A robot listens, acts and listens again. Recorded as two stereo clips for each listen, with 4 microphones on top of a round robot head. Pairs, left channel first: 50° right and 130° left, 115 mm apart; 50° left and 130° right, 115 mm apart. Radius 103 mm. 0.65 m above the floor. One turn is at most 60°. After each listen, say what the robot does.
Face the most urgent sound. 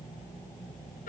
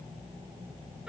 Keep listening.
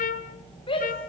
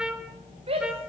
Turn 60° right.
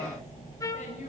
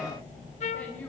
Turn 35° right.
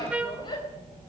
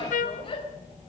Facing the shout.